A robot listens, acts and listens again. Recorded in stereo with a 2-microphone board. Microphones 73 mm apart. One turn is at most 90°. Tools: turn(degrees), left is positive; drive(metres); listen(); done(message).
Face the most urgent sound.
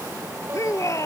turn(degrees=45)
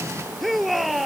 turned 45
done("Facing the shout.")